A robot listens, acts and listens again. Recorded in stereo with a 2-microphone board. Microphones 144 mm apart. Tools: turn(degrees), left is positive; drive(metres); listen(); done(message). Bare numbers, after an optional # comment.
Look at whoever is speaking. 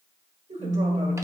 # The man speaking: about 55° right or 125° right.
turn(-55)
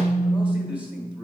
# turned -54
listen()
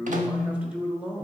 # So it is at 10° right.
turn(-10)
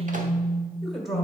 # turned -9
done("Facing the man speaking, 1 to 2 m away.")